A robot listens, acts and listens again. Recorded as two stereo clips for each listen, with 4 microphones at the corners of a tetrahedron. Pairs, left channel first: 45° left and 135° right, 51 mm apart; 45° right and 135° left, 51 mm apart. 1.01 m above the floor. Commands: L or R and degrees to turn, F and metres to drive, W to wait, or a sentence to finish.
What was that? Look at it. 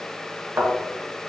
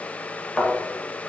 R120
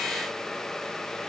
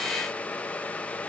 I heard a thud from this way, but can't make it out now.